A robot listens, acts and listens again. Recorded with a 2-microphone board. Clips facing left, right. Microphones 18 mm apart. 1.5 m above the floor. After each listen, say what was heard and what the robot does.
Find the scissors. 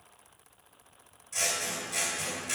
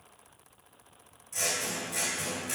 The scissors: about 20° left or 160° left. Turn 20° left.
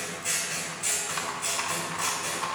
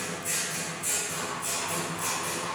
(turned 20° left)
So it is at 140° left. Turn 140° left.
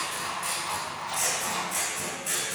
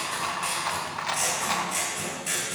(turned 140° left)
Found it: scissors, straight ahead.